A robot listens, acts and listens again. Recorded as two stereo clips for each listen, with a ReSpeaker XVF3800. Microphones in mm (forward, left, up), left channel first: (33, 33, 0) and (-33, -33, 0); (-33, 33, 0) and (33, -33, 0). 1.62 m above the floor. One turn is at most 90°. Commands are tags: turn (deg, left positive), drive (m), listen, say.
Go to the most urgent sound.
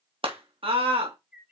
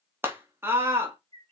<turn deg="-90"/>
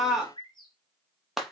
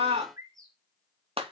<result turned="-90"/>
<turn deg="-50"/>
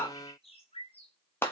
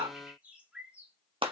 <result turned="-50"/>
<turn deg="-25"/>
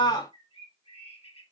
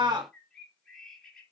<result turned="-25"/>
<drive m="1.0"/>
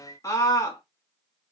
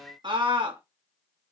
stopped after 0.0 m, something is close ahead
<turn deg="-10"/>
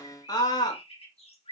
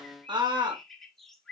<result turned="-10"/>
<say>Blocked. The scream is further on, straight ahead.</say>